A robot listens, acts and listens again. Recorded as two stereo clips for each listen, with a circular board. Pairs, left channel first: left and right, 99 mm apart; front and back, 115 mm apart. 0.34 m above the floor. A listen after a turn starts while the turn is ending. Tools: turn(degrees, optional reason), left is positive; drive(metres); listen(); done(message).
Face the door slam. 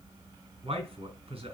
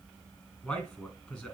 listen()
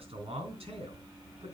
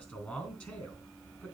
listen()
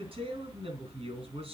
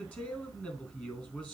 done("I can't make out a door slam, only a man speaking.")